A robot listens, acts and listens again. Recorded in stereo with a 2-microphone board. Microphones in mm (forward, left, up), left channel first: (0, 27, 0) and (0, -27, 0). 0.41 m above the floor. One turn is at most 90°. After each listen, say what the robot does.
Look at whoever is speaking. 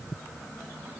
Keep listening.
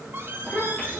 Turn 25° left.
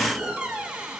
Keep listening.
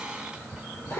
Turn 90° left.
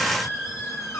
Turn 35° left.
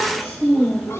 Turn 10° right.
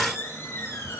Keep listening.
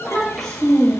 Found it: a child speaking, straight ahead, over 4 m away.